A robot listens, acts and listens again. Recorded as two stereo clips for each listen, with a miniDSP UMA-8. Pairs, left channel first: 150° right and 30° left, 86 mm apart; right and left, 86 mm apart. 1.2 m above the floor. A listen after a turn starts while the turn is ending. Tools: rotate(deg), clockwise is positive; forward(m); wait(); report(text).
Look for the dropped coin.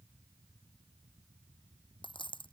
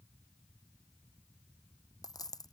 rotate(130)
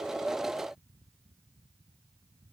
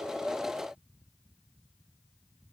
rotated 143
rotate(-10)
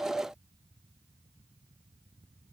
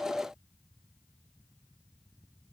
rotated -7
report("I heard a dropped coin from this way, but can't make it out now.")